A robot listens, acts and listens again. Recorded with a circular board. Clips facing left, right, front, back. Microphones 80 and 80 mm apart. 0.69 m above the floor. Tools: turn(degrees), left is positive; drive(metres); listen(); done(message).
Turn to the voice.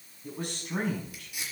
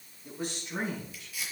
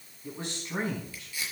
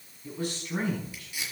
turn(degrees=65)
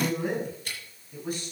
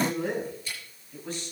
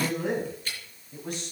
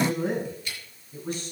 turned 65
turn(degrees=10)
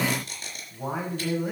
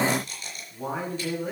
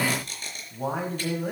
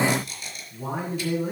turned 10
turn(degrees=10)
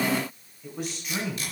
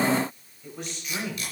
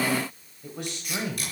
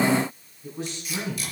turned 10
done("Found it: a man speaking, straight ahead, 2 to 4 m away.")